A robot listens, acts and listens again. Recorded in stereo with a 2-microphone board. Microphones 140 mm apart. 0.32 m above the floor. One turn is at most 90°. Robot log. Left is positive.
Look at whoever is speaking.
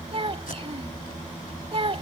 note: The child speaking: about 40° right or 140° right.
cmd yaw -40
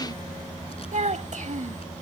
note: So it is at 85° right.
cmd yaw -85
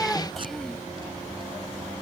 end: Facing the child speaking.